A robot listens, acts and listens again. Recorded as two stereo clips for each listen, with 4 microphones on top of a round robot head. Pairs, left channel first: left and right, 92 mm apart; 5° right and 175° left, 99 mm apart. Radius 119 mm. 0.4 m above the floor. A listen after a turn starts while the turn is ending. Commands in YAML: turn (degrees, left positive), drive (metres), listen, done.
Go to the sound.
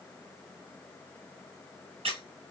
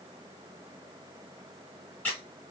turn: -85
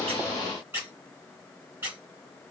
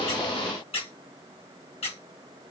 turn: -20
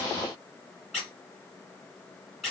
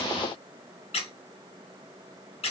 drive: 1.0
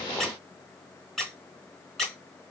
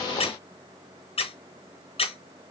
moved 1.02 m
drive: 1.0
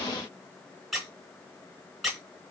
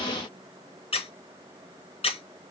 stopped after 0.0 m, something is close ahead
done: "I am next to the squeak."